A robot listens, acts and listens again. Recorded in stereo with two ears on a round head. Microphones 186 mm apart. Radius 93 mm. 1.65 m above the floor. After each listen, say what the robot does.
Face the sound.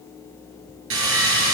Turn 75° right.
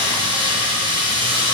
Turn 25° right.
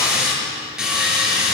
Facing the sawing, over 4 m away.